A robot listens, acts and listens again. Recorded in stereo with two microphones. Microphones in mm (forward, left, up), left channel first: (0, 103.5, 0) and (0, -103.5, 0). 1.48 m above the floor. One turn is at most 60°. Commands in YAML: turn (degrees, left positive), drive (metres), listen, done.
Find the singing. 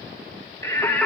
turn: 30
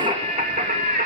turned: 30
turn: -45
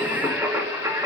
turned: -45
turn: -15
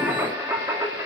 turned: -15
turn: -15
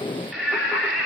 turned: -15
done: "Found it: singing, straight ahead, 2 to 4 m away."